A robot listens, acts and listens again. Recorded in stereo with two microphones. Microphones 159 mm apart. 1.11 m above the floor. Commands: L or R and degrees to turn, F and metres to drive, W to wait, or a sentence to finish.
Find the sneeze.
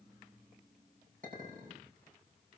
W
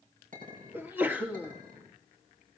R30
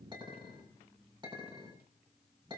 W
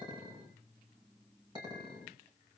I heard a sneeze, but can't make it out now. It was about 20° left or 140° right.